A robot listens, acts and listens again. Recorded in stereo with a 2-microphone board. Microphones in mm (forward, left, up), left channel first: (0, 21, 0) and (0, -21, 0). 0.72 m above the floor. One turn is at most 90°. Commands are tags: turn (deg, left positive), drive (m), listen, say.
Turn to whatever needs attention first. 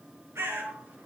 <listen/>
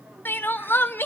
<turn deg="55"/>
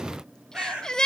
<turn deg="20"/>
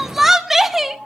<turn deg="-10"/>
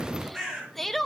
<say>Facing the crying.</say>